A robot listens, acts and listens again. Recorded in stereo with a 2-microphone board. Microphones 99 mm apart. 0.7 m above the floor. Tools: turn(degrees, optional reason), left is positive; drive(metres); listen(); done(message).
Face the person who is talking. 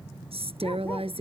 turn(degrees=-90)
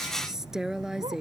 done("Found it: a woman speaking, straight ahead.")